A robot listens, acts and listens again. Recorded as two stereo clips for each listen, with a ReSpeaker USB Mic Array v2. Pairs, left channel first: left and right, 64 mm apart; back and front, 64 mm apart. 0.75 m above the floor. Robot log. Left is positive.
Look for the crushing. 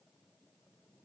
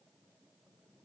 cmd idle
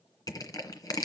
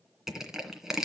note: The crushing: 85° left.
cmd yaw +85
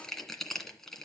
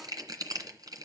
end: Found it: crushing, straight ahead, 2 to 4 m away.